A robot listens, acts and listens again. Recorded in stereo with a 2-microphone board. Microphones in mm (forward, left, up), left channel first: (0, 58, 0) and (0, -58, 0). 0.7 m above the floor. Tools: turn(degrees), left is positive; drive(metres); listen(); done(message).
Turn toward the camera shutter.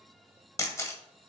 turn(degrees=25)
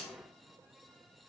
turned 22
listen()
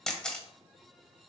turn(degrees=10)
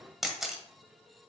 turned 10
done("Found it: a camera shutter, straight ahead.")